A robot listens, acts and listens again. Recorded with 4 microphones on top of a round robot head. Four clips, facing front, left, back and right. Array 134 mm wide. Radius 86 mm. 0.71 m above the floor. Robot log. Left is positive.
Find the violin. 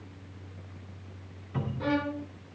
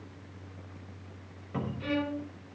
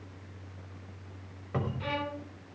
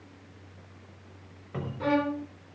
note: The violin: 55° right.
cmd yaw -55
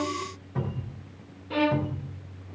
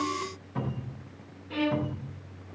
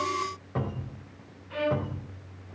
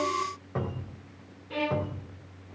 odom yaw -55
note: The violin is now 10° right.
cmd yaw -10
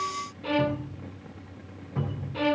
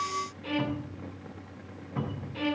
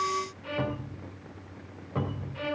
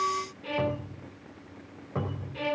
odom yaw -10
end: Facing the violin, under 1 m away.